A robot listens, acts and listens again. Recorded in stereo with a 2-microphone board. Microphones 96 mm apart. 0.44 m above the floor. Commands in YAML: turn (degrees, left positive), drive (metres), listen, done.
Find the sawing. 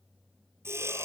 turn: -25
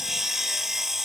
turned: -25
done: "Facing the sawing."